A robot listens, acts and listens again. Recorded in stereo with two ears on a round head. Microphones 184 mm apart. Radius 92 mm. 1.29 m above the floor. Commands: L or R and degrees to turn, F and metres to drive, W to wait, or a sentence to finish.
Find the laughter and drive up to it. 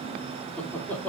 L30
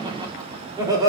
R20
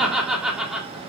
F1.0
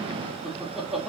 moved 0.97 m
F1.0
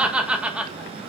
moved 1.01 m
F1.0
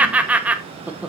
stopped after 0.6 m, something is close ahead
I am next to the laughter.